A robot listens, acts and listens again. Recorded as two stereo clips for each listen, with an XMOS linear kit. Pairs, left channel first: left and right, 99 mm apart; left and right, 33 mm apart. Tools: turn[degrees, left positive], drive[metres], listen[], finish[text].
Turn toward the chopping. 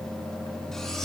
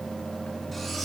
Action: listen[]
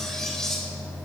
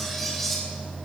Action: listen[]
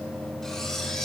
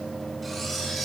Action: finish[I can't make out chopping, only cutlery clinking.]